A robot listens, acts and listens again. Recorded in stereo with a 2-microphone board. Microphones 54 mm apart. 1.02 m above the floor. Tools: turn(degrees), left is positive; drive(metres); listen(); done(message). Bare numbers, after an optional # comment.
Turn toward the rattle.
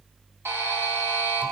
listen()
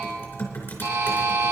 listen()
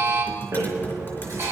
turn(-90)
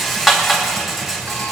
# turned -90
done("Found it: a rattle, straight ahead.")